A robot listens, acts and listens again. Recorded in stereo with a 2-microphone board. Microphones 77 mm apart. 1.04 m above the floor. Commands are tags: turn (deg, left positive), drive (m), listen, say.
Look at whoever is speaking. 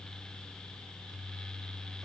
<listen/>
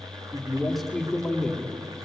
<turn deg="30"/>
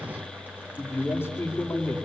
<turn deg="150"/>
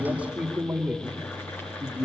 <turn deg="-20"/>
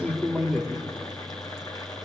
<say>Facing the man speaking, 2 to 4 m away.</say>